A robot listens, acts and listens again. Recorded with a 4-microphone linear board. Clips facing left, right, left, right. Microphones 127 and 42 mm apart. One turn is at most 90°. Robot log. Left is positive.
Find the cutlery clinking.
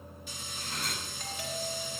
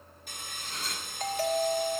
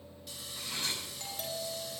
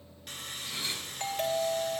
note: The cutlery clinking: about 75° left or 105° left.
cmd yaw +75
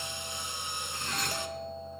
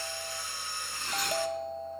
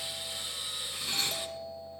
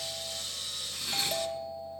end: Facing the cutlery clinking, over 4 m away.